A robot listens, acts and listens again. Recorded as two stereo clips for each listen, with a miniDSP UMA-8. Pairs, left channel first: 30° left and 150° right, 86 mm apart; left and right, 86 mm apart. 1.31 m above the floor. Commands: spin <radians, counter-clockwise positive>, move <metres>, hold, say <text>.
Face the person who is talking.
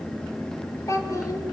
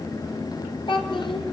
spin 1.40
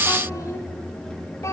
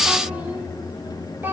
spin -0.44
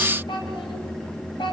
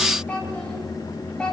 spin 0.17
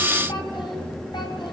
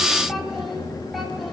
hold
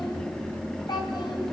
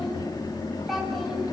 say Found it: a child speaking, straight ahead, over 4 m away.